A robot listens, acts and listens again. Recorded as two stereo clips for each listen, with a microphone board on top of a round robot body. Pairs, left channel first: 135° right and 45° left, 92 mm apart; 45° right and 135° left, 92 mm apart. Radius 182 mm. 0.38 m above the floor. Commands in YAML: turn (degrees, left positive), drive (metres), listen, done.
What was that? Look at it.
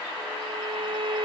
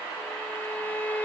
turn: 25
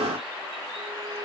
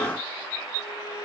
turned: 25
listen: true
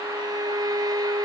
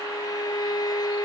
done: "Found it: a violin, straight ahead."